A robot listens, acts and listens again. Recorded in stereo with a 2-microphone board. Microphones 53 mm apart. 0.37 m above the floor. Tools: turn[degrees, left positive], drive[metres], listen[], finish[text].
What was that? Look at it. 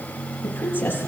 Thought: The woman speaking: about 45° left or 135° left.
Action: turn[45]
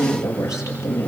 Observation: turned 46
Thought: So it is at 85° left.
Action: turn[85]
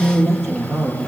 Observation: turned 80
Thought: The woman speaking is now 10° left.
Action: turn[10]
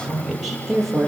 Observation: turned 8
Action: finish[Facing the woman speaking.]